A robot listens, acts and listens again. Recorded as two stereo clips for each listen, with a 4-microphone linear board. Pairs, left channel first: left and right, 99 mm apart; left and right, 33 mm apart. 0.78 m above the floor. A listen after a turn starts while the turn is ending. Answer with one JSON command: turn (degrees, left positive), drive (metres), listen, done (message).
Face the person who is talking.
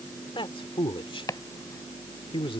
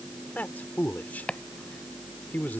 {"turn": 60}
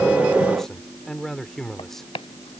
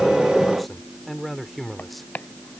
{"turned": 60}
{"done": "Found it: a man speaking, straight ahead."}